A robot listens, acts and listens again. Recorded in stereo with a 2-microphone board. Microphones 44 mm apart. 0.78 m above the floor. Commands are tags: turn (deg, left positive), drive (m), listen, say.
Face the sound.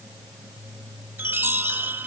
<turn deg="-50"/>
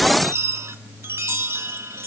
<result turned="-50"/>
<turn deg="-80"/>
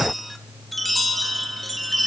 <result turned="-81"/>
<say>Found it: a chime, straight ahead.</say>